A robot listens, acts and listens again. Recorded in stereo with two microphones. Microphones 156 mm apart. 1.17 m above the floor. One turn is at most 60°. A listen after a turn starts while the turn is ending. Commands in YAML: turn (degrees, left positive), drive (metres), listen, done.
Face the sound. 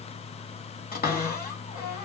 turn: 60
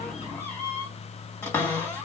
turn: 15
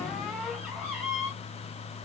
done: "Found it: a cupboard door, straight ahead."